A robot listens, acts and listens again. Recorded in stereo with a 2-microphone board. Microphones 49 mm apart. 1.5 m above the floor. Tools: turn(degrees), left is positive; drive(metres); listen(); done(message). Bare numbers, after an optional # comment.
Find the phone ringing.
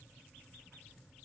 listen()
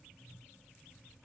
listen()
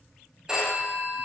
turn(-30)
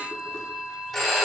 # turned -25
# So it is at 10° left.
turn(10)
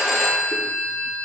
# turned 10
done("Found it: a phone ringing, straight ahead.")